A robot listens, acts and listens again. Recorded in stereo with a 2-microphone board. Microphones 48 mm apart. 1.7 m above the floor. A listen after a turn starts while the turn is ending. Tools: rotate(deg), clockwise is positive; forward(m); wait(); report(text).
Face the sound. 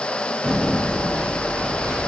rotate(70)
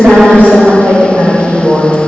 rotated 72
rotate(40)
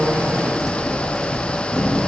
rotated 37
report("Found it: typing on a keyboard, straight ahead.")